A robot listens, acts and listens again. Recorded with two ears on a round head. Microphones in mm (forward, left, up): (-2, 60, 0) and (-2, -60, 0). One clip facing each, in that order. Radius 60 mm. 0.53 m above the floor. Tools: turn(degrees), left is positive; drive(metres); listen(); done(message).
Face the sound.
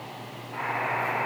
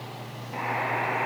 turn(degrees=-25)
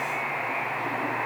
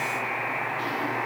done("Found it: a buzzer, straight ahead, over 4 m away.")